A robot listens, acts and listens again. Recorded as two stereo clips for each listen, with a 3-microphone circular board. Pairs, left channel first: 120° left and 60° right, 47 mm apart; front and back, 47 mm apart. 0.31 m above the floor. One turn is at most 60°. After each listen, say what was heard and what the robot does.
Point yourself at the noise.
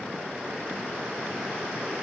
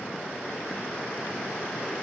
Keep listening.
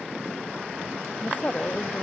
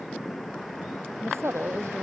The woman speaking: 170° left. Turn 60° left.
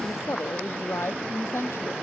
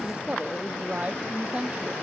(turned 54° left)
The woman speaking is now 125° left. Turn 60° left.
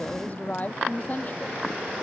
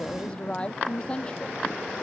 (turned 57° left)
The woman speaking is now 70° left. Turn 60° left.
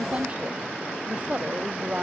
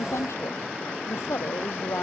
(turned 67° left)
Facing the woman speaking.